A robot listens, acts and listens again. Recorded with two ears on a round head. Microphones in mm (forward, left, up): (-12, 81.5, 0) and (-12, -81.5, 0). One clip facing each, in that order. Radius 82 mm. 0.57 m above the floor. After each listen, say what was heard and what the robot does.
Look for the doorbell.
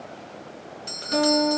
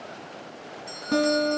The doorbell: about 65° left or 115° left. Turn 65° left.
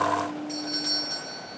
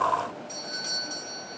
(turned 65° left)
Facing the doorbell.